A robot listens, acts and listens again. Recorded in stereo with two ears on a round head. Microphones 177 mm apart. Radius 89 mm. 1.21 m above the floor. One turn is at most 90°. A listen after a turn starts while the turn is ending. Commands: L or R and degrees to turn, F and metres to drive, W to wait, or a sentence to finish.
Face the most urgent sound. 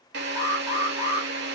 R15
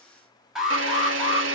Facing the alarm.